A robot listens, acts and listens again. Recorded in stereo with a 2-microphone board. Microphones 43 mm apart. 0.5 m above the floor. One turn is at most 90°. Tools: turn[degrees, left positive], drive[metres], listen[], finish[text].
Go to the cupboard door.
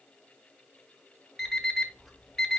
Action: listen[]
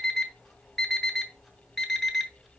Action: listen[]
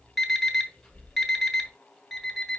Action: finish[I can't make out a cupboard door, only an alarm clock.]